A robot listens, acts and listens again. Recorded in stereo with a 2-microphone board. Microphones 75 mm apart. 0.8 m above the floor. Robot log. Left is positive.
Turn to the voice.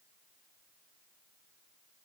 cmd idle
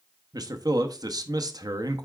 note: The man speaking: about 55° right or 125° right.
cmd yaw -55
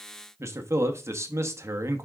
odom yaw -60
note: So it is at 45° right.
cmd yaw -45
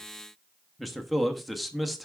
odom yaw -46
end: Facing the man speaking, under 1 m away.